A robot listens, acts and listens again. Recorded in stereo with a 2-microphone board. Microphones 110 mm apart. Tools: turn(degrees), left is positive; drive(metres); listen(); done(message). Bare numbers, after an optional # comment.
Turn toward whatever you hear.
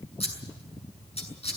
# The scissors: about 65° left or 115° left.
turn(65)
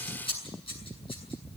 # So it is at 55° left.
turn(55)
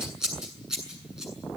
done("Found it: scissors, straight ahead.")